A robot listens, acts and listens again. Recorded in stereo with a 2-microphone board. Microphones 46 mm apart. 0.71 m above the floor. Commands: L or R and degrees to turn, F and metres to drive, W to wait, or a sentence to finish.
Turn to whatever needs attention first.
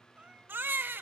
R50
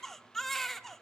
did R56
L10
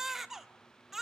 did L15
Facing the baby crying.